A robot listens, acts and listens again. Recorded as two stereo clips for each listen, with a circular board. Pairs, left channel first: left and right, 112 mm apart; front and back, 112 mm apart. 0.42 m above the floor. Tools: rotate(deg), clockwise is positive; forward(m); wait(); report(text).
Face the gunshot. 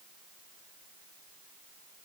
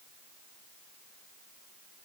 wait()
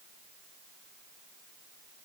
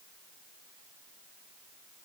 wait()
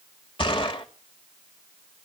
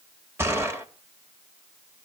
rotate(-115)
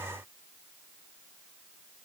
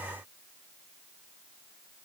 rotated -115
report("I heard a gunshot from this way, but can't make it out now.")